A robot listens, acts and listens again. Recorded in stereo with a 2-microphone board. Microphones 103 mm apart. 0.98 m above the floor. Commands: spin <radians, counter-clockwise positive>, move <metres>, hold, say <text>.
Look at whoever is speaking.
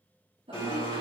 spin -1.13
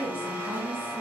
spin -0.87
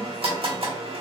hold
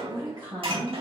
spin -0.79
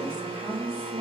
spin -0.26
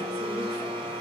hold
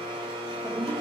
say Found it: a woman speaking, straight ahead.